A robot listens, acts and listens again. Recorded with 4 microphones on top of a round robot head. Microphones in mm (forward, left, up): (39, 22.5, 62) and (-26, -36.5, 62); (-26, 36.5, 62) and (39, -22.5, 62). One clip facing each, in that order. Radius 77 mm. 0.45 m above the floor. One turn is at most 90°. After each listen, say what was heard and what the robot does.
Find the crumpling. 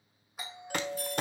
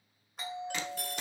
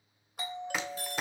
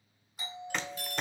The crumpling: 55° left. Turn 55° left.
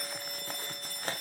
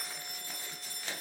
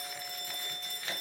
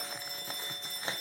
The crumpling is now 10° left. Turn 10° left.
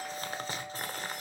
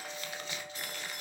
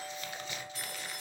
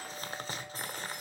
Found it: crumpling, straight ahead, 1 to 2 m away.